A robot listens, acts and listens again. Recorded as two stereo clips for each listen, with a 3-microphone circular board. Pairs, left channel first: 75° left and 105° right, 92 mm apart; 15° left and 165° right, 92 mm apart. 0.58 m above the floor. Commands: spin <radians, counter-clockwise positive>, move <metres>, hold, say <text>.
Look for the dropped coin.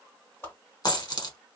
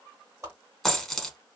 spin 1.75
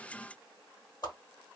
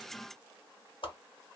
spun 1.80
say Facing where the dropped coin came from. I can't hear it now.